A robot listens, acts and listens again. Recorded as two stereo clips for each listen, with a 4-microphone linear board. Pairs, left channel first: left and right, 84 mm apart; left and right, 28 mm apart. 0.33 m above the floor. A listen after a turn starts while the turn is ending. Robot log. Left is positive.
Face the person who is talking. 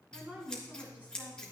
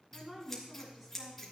note: The woman speaking: about 20° right or 160° right.
cmd yaw -20
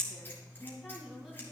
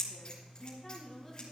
cmd idle
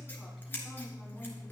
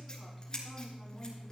cmd idle
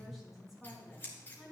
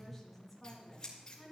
end: Facing the woman speaking.